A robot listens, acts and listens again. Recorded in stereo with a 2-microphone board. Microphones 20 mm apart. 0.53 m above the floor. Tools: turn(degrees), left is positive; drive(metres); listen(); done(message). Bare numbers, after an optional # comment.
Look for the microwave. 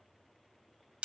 listen()
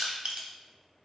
listen()
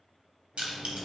turn(30)
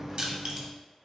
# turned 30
# So it is at 20° right.
turn(-20)
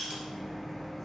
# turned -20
done("Found it: a microwave, straight ahead, under 1 m away.")